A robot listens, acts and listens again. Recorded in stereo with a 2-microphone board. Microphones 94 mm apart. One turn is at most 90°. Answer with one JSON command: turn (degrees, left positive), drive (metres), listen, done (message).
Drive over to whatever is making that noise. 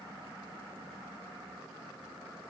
{"listen": true}
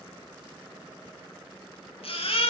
{"turn": 90}
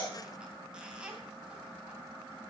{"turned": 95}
{"listen": true}
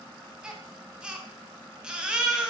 {"turn": -10}
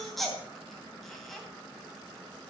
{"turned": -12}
{"drive": 1.0}
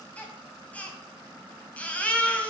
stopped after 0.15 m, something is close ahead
{"turn": 15}
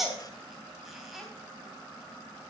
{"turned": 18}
{"done": "Blocked. The baby crying is further on, straight ahead."}